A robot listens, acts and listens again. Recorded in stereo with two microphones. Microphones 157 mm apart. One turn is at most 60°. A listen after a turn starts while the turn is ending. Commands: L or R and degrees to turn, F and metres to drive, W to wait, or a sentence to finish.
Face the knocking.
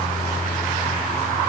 W
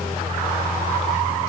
W
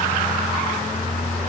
I can't make out knocking to turn to.